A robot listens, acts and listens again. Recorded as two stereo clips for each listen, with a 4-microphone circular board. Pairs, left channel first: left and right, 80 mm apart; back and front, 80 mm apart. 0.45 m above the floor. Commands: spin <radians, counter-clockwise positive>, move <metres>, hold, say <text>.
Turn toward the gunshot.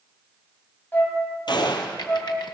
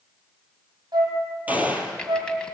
spin 1.22
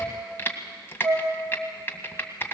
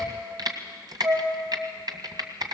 say I heard a gunshot from this way, but can't make it out now.